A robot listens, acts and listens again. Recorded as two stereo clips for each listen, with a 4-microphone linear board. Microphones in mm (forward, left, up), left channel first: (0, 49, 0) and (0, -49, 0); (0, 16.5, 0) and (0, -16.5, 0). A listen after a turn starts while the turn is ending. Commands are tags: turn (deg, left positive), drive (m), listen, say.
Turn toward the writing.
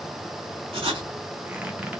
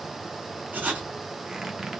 <turn deg="-65"/>
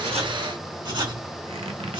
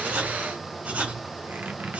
<turn deg="-55"/>
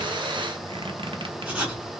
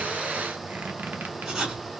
<turn deg="-15"/>
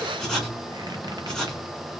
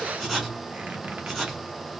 <say>Found it: writing, straight ahead, 1 to 2 m away.</say>